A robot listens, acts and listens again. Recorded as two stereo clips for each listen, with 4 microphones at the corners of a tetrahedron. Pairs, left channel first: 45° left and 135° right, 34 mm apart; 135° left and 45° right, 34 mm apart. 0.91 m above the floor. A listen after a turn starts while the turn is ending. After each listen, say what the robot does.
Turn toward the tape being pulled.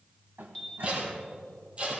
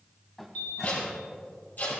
Turn 165° left.
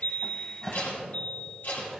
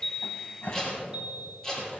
Turn 65° left.
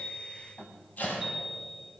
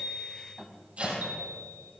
Keep listening.
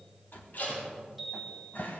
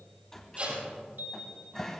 Found it: tape being pulled, straight ahead, over 4 m away.